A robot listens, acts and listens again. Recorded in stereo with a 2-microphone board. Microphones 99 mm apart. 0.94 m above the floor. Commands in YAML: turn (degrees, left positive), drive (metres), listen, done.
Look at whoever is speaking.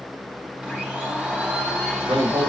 turn: -55
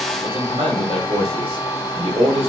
turn: -70
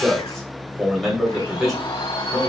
done: "Facing the man speaking."